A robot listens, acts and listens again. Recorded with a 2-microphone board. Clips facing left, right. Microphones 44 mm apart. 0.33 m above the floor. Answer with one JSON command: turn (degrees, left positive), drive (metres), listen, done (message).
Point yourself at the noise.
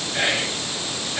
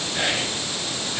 {"turn": 25}
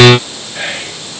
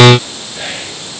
{"turn": 130}
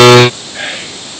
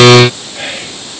{"turn": 35}
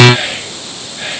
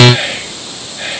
{"done": "Found it: whispering, straight ahead, over 4 m away."}